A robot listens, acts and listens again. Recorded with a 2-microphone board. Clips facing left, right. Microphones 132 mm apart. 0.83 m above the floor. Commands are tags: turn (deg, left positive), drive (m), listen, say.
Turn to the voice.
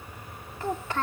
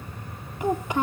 <turn deg="-15"/>
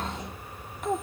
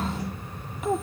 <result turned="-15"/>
<say>Facing the child speaking.</say>